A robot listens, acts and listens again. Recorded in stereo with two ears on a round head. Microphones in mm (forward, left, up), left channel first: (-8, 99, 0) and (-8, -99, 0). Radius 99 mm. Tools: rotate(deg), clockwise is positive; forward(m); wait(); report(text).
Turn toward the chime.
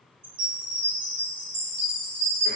rotate(40)
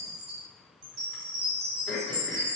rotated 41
rotate(100)
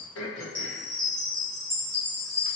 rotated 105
report("Found it: a chime, straight ahead.")